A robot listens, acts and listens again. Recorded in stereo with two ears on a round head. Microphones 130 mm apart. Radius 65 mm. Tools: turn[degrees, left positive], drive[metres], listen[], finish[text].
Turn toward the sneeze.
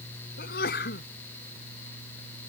Thought: The sneeze: about 70° left or 110° left.
Action: turn[70]
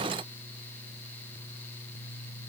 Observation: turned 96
Action: listen[]
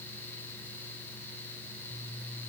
Action: finish[I heard a sneeze, but can't make it out now. It was about 15° left or 30° right.]